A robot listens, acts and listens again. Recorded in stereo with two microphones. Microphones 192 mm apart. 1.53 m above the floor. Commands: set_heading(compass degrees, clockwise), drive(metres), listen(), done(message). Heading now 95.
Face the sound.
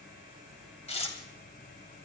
set_heading(65)
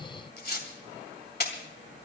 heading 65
set_heading(315)
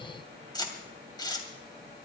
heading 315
set_heading(290)
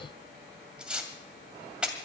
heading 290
done("Facing the tearing paper, 2 to 4 m away.")